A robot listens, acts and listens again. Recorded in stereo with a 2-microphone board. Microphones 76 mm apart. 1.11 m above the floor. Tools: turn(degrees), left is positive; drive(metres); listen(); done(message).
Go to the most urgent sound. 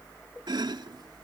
listen()
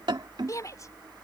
turn(degrees=45)
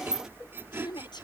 turn(degrees=85)
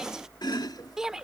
turn(degrees=-10)
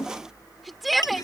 drive(metres=1.0)
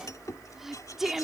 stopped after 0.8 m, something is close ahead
done("Blocked. The shout is further on, straight ahead.")